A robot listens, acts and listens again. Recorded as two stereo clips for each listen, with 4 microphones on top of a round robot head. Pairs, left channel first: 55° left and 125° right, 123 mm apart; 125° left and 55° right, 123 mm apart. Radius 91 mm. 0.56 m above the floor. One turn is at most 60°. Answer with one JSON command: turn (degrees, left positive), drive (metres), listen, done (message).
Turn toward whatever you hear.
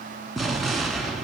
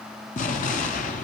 {"turn": 60}
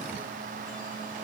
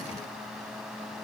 {"turn": 60}
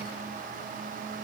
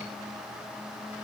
{"turn": 25}
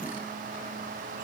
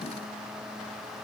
{"done": "Facing where the explosion came from. I can't hear it now."}